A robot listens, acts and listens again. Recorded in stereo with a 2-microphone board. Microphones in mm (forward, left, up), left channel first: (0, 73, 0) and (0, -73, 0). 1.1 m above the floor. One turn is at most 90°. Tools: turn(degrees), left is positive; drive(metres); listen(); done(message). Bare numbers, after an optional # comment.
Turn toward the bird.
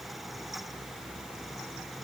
listen()
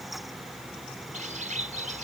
# The bird: about 60° right or 120° right.
turn(-60)
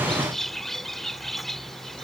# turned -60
done("Found it: a bird, straight ahead.")